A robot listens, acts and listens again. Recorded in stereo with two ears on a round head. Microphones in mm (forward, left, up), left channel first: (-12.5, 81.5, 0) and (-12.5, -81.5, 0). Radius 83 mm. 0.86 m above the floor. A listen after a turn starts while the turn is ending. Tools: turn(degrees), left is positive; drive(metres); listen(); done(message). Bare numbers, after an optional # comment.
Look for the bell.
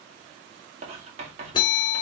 # The bell: about 25° left or 155° left.
turn(25)
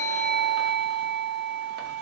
done("Facing the bell.")